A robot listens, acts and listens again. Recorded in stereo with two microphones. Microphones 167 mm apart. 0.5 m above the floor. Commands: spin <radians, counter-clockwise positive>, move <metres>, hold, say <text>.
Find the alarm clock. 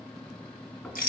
hold
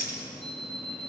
spin -1.22
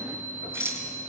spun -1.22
spin -0.70
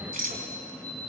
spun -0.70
say Found it: an alarm clock, straight ahead.